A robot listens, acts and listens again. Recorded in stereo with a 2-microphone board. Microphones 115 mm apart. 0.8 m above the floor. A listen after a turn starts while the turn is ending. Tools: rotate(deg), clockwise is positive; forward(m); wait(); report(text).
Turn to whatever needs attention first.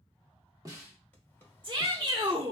rotate(40)
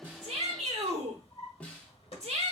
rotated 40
rotate(95)
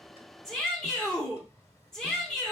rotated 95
report("Facing the shout.")